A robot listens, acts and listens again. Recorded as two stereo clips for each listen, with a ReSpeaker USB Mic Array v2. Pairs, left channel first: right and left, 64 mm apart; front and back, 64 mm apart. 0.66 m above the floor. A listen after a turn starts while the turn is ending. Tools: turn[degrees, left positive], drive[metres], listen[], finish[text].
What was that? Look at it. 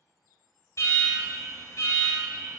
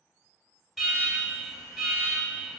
Thought: The alarm: 90° right.
Action: turn[-90]
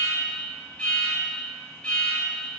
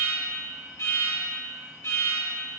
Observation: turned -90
Thought: The alarm is now 20° right.
Action: turn[-20]
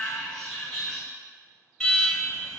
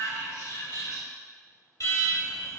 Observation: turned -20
Action: finish[Found it: an alarm, straight ahead, 1 to 2 m away.]